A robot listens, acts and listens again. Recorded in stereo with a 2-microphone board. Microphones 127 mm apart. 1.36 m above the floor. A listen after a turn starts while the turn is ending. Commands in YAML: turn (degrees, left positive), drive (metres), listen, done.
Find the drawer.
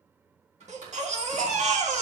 turn: -65
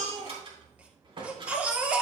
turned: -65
turn: -45
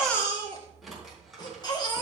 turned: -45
done: "Found it: a drawer, straight ahead, 2 to 4 m away."